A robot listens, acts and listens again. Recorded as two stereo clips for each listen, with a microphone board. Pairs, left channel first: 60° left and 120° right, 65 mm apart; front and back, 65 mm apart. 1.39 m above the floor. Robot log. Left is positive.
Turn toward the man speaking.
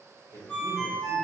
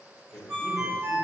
note: The man speaking: 60° left.
cmd yaw +60
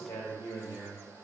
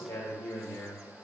note: The man speaking is now 35° left.
cmd yaw +35
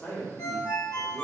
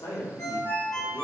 end: Facing the man speaking, 1 to 2 m away.